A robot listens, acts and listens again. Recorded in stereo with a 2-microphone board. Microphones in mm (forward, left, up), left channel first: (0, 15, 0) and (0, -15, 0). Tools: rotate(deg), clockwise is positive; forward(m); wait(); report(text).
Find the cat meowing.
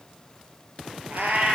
rotate(90)
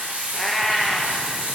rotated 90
rotate(10)
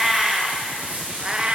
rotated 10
rotate(40)
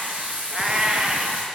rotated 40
rotate(30)
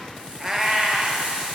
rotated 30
report("Facing the cat meowing, 1 to 2 m away.")